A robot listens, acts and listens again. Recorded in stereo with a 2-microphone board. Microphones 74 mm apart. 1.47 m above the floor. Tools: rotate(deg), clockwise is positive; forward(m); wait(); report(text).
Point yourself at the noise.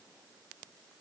wait()
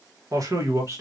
rotate(40)
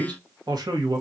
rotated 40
rotate(120)
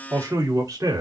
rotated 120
rotate(50)
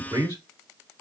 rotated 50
rotate(40)
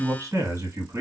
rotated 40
rotate(35)
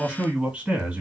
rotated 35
rotate(10)
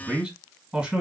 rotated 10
report("Facing the man speaking.")